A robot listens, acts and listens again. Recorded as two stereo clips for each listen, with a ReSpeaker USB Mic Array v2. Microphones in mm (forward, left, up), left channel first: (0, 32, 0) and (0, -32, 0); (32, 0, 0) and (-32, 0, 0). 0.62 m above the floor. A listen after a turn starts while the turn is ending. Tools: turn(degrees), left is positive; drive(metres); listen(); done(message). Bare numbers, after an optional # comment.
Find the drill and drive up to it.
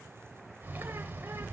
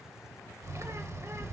listen()
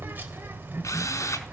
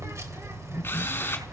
# The drill: 55° left.
turn(55)
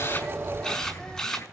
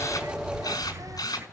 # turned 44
# The drill is now 10° left.
turn(10)
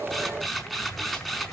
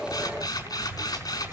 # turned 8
drive(1.0)
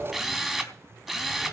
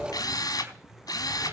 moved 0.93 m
drive(1.0)
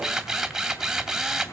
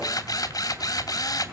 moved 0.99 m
drive(1.0)
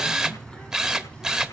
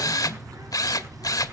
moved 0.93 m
# The drill is now 10° right.
turn(-10)
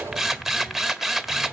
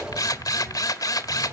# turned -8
drive(1.0)
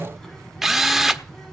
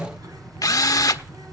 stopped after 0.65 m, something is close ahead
done("Arrived at the drill, straight ahead.")